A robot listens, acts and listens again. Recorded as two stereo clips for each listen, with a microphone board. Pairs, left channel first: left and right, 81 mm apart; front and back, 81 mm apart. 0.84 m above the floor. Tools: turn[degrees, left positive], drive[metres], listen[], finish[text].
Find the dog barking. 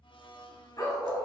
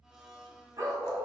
Thought: The dog barking: 130° left.
Action: turn[130]
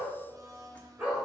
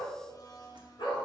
Thought: The dog barking is now 20° right.
Action: turn[-20]
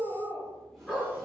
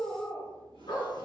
Action: finish[Facing the dog barking, 2 to 4 m away.]